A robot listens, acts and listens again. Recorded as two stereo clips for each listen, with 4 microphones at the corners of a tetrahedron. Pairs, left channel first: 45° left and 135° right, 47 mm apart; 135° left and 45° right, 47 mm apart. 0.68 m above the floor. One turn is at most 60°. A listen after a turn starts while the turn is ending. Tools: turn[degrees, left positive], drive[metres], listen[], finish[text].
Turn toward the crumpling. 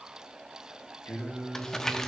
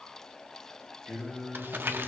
Thought: The crumpling: 30° right.
Action: turn[-30]
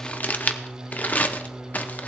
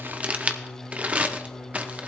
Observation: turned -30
Action: finish[Facing the crumpling, under 1 m away.]